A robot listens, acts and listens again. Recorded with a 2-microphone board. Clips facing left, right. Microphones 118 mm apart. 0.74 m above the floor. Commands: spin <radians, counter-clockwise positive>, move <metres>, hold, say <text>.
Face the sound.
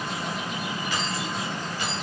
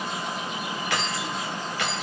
spin -1.31
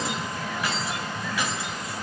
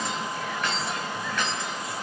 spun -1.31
spin 0.17
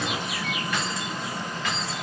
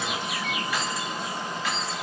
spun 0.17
say Found it: keys jangling, straight ahead, over 4 m away.